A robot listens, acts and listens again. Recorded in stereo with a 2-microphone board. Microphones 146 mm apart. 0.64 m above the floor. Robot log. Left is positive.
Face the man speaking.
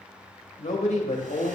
note: The man speaking: about 50° left or 130° left.
cmd yaw +50
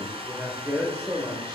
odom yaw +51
note: So it is at 25° right.
cmd yaw -25
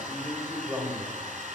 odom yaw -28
note: The man speaking is now 25° right.
cmd yaw -25
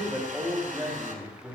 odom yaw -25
note: The man speaking is now 25° right.
cmd yaw -25
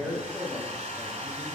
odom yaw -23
end: Found it: a man speaking, straight ahead.